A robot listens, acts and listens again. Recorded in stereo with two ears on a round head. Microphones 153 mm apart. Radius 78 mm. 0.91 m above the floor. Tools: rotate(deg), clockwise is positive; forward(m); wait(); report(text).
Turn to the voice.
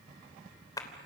wait()
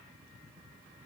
wait()
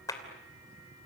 report("I can't make out anyone speaking, only a clap.")